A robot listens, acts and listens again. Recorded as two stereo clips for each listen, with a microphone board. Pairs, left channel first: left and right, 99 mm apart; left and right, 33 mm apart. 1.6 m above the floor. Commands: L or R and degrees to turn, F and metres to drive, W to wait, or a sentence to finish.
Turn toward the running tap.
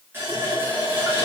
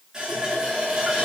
R25
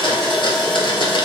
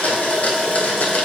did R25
Facing the running tap.